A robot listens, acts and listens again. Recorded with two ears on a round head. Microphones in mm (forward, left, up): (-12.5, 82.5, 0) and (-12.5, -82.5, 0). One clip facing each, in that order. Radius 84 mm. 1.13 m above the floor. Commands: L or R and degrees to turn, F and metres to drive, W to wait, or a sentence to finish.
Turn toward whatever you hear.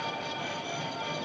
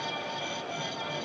W
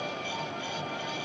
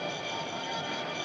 W
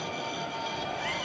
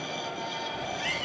R30
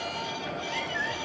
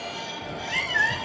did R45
R105
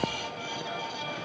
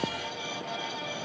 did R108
W
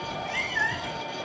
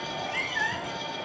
Facing the cat meowing.